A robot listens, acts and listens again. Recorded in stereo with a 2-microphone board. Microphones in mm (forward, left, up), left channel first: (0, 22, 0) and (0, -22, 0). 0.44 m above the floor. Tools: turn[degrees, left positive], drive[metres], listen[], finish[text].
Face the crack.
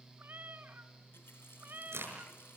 Action: turn[-90]
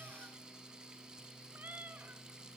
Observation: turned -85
Action: finish[Facing where the crack came from. I can't hear it now.]